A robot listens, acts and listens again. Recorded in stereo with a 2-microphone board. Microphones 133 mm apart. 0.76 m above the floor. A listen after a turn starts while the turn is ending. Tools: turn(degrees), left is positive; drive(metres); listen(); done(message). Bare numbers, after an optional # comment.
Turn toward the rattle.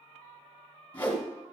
listen()
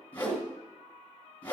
listen()
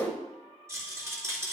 # The rattle: about 20° right or 160° right.
turn(-20)
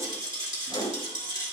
# So it is at 140° right.
turn(-140)
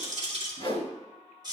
# The rattle is now 35° right.
turn(-35)
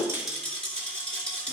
# The rattle is now 10° left.
turn(10)
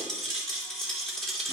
done("Found it: a rattle, straight ahead.")